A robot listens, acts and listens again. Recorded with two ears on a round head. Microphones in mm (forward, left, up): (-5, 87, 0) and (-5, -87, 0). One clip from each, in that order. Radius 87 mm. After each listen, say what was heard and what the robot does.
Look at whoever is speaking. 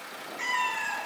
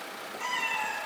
Keep listening.
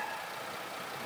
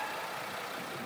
Keep listening.
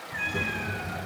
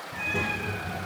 Turn 30° right.
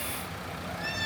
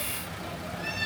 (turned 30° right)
So it is at 135° right. Turn 135° right.
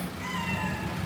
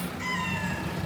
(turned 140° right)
Found it: a child speaking, straight ahead.